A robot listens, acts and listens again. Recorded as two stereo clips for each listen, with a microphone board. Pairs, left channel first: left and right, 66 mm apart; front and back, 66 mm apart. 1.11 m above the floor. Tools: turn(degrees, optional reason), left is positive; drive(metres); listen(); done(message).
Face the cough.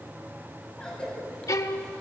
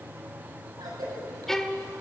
turn(degrees=170, reason="The cough: 170° left.")
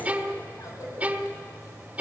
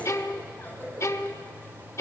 listen()
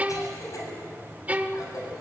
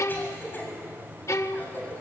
turn(degrees=60, reason="The cough is now 60° left.")
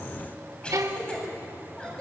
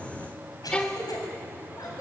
turn(degrees=15, reason="The cough is now 15° left.")
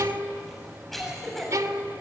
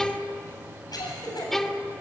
done("Found it: a cough, straight ahead, over 4 m away.")